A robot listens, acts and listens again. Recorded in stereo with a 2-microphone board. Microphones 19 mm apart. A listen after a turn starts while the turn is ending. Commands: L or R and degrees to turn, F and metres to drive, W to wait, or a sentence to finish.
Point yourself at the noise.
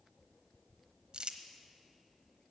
R50
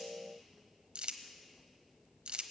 R80
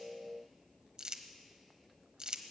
R50
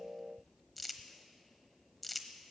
Found it: crumpling, straight ahead.